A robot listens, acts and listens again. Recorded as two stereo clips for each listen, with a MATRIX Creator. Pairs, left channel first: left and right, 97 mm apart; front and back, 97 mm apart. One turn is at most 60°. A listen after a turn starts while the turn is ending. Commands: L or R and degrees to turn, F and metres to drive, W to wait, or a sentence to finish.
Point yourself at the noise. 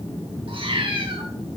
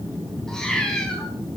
R60
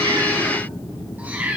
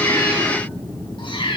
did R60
R20
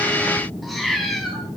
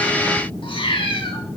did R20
Facing the cat meowing.